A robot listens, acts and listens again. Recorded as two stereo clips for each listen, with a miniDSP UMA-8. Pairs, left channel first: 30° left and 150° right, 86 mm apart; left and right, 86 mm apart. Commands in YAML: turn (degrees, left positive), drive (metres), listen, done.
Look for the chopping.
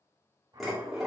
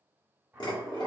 turn: -165
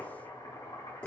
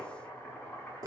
turn: 25
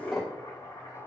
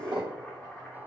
turn: 10
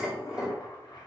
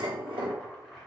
done: "Found it: chopping, straight ahead."